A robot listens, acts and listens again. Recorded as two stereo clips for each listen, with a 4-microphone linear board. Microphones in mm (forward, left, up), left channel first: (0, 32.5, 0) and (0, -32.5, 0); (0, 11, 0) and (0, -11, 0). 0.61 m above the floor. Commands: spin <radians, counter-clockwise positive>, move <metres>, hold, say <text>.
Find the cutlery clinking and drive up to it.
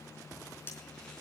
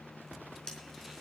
spin 0.61
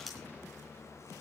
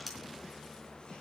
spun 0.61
move 1.0
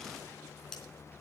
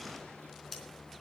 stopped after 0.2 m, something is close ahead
spin 0.17
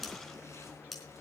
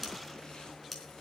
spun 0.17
say Blocked. The cutlery clinking is further on, straight ahead.